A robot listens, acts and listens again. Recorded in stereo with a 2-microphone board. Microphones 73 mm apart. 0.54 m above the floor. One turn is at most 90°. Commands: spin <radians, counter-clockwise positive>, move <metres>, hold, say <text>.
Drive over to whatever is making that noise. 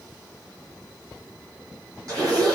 spin -0.87
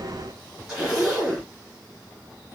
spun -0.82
move 1.0
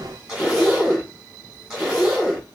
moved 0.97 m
spin -0.17
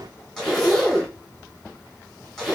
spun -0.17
move 1.0
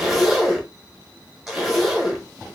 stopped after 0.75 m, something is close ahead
say I am next to the zipper.